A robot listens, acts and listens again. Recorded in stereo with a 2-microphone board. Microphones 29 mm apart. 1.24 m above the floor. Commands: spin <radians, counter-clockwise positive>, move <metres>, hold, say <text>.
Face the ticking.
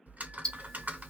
spin 0.35
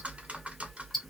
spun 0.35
say Found it: ticking, straight ahead.